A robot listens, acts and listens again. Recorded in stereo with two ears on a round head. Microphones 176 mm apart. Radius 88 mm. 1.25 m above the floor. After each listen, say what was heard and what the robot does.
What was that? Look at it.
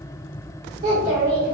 The child speaking: about 30° right or 150° right. Turn 30° right.
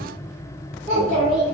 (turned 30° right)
The child speaking: about 40° right or 140° right. Turn 40° right.
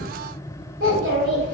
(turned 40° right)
So it is at 110° right. Turn 110° right.
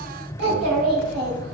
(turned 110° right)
The child speaking is now 55° right. Turn 55° right.
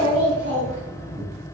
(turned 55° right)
Found it: a child speaking, straight ahead.